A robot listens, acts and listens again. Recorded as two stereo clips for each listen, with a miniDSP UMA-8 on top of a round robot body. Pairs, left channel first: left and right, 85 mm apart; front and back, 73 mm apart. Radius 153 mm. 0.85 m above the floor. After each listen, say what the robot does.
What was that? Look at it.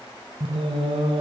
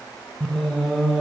Turn 90° right.
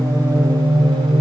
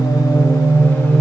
Turn 70° right.
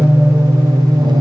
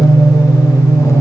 Turn 50° right.
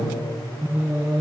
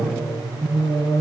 Turn 30° right.
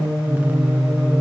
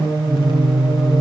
Turn 20° right.
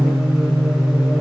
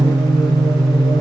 Facing the singing.